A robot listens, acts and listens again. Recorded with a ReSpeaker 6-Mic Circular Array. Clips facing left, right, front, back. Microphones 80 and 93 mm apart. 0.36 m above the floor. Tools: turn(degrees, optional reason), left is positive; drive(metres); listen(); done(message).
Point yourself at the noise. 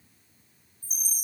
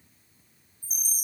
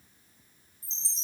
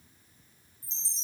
turn(degrees=55, reason="The chime: 55° left.")
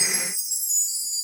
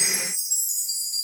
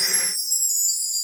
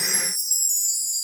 done("Found it: a chime, straight ahead.")